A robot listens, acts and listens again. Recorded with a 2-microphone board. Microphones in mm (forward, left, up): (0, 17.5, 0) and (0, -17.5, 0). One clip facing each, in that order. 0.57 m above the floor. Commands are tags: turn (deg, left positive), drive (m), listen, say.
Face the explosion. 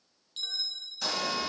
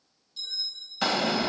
<turn deg="-55"/>
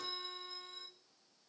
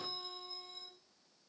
<listen/>
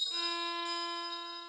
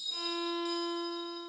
<say>I heard an explosion, but can't make it out now. It was about straight ahead or 70° right.</say>